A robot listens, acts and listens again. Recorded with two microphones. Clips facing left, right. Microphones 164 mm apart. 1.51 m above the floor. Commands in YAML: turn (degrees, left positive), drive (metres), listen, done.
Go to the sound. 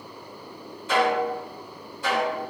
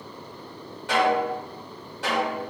turn: -90
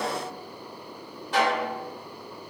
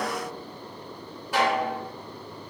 turn: -10
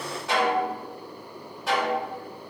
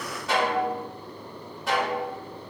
drive: 1.0
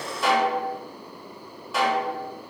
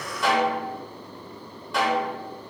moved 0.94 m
drive: 1.0
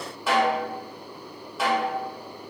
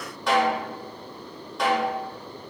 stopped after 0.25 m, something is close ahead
done: "Arrived at the snare drum, straight ahead."